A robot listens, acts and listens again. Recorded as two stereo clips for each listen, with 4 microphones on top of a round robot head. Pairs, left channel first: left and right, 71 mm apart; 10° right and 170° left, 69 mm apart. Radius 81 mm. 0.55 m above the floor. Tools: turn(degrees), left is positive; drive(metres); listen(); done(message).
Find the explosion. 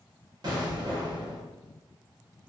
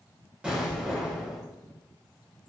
turn(degrees=-110)
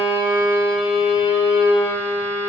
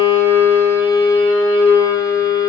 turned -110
done("Facing where the explosion came from. I can't hear it now.")